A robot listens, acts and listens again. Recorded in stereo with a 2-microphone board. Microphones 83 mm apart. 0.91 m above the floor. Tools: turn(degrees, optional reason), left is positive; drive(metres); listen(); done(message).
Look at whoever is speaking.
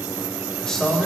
turn(degrees=30)
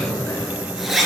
turn(degrees=145, reason="So it is at 145° left.")
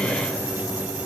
listen()
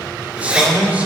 turn(degrees=-20, reason="The man speaking is now 20° right.")
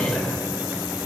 done("Facing the man speaking, 2 to 4 m away.")